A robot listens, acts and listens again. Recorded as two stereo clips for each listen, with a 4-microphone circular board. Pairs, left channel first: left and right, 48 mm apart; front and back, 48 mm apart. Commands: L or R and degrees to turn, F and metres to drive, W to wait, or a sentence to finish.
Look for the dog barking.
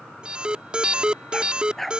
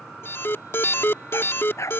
Facing the dog barking.